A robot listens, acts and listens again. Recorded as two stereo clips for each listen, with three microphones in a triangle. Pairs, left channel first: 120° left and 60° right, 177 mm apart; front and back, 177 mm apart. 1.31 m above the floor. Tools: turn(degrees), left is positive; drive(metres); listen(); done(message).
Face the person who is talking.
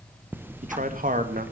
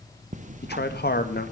turn(degrees=-25)
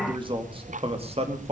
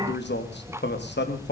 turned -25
turn(degrees=-10)
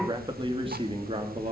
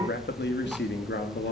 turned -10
done("Facing the man speaking, 2 to 4 m away.")